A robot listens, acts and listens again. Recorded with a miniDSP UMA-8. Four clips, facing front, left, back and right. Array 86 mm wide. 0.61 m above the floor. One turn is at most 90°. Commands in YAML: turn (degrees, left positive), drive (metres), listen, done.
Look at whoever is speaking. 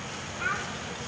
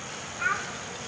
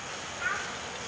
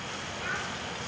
turn: 60
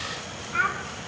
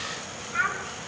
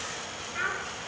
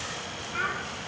done: "Facing the child speaking, 2 to 4 m away."